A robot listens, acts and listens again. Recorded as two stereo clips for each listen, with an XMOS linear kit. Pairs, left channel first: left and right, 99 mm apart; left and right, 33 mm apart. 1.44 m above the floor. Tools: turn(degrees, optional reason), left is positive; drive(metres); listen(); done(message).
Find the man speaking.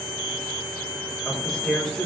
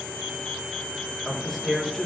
turn(degrees=30)
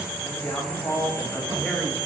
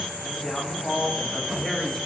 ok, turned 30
turn(degrees=160, reason="So it is at 160° left.")
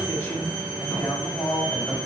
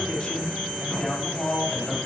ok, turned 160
turn(degrees=25, reason="The man speaking is now 25° left.")
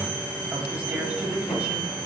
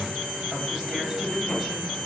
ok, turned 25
turn(degrees=-15, reason="The man speaking is now 15° right.")
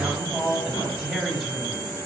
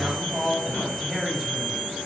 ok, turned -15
turn(degrees=-10, reason="The man speaking is now 10° right.")
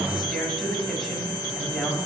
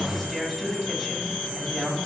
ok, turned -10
done("Facing the man speaking.")